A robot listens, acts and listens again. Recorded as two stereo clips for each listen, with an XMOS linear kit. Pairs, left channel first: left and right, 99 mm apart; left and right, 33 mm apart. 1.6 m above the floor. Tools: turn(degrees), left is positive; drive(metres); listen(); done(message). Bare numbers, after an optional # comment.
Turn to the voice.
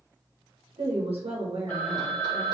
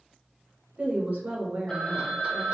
# The woman speaking: about 70° right or 110° right.
turn(-70)
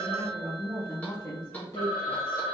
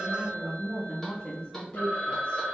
# So it is at 30° left.
turn(30)
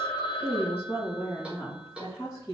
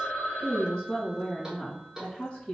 # The woman speaking is now 30° left.
turn(30)
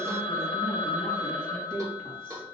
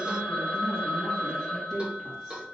done("Found it: a woman speaking, straight ahead.")